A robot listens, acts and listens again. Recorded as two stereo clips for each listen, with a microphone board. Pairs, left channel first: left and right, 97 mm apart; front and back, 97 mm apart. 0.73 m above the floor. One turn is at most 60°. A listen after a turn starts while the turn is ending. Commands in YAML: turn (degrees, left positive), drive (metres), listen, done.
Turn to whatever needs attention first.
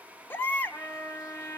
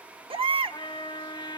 turn: 60
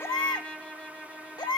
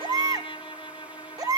turn: 60
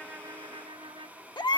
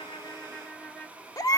turn: 50
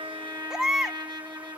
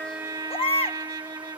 done: "Facing the baby crying, under 1 m away."